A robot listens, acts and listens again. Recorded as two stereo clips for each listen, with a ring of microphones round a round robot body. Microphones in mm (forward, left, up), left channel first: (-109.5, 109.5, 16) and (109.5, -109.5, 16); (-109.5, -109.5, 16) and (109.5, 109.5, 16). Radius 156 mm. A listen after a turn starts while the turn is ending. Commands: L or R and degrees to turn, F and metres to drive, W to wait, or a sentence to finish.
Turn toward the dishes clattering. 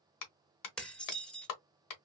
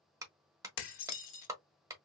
R140
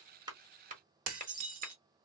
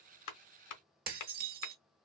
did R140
R10
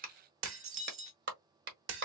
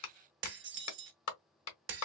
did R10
Found it: dishes clattering, straight ahead, under 1 m away.